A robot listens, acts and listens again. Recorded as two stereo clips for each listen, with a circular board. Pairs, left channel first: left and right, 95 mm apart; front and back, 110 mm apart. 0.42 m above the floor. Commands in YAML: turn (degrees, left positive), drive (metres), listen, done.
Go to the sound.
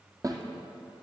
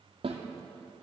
turn: -145
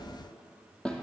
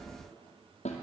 drive: 1.0
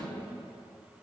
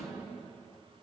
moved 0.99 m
listen: true
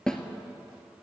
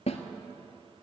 drive: 1.0
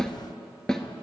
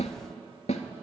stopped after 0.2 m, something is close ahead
done: "I am next to the snare drum."